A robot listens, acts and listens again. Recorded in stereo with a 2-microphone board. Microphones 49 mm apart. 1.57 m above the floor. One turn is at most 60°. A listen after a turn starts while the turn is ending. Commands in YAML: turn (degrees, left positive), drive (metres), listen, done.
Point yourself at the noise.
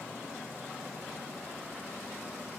listen: true
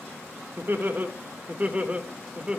turn: -20
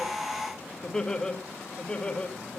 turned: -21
turn: 20
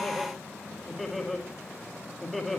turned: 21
done: "Found it: laughter, straight ahead, 2 to 4 m away."